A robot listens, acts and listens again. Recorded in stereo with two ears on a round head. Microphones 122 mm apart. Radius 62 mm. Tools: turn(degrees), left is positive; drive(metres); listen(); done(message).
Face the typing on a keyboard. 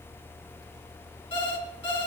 listen()
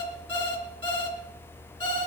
listen()
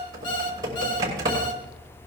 turn(degrees=-25)
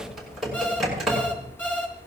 done("Facing the typing on a keyboard.")